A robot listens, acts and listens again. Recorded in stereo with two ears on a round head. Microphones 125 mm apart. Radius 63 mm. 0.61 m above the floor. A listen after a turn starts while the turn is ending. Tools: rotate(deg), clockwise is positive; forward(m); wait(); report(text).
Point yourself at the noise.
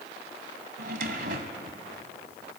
rotate(65)
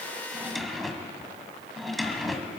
report("Facing the drawer.")